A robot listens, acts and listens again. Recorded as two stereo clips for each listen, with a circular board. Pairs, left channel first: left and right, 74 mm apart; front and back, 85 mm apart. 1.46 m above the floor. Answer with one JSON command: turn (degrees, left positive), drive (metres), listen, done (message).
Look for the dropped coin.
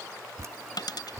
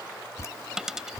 {"turn": 95}
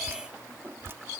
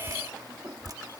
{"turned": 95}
{"done": "I heard a dropped coin from this way, but can't make it out now."}